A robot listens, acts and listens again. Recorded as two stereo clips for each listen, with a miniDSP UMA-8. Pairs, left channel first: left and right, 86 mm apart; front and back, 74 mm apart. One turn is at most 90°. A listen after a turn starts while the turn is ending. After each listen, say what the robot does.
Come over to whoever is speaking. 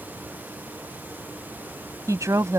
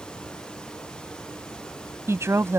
Turn 90° right.
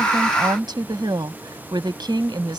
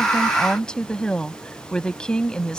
Turn 75° right.
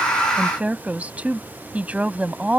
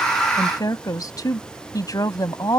Turn 20° right.
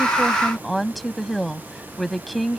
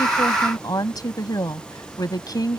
Drive 1.0 m forward.
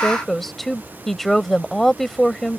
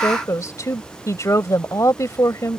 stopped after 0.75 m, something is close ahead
I am next to the woman speaking.